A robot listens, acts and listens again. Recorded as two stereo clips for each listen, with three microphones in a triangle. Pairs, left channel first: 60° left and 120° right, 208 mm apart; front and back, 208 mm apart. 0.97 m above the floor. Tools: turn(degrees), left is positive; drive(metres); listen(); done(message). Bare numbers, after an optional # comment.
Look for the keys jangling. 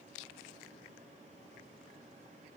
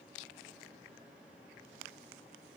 listen()
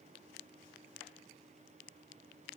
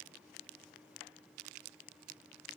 listen()
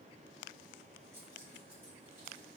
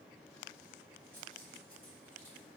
# The keys jangling: 165° left.
turn(165)
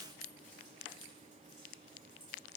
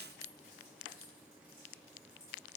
# The keys jangling is now 15° left.
turn(15)
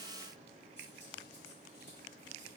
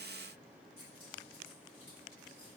listen()
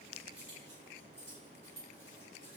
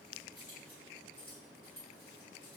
done("Facing the keys jangling, 2 to 4 m away.")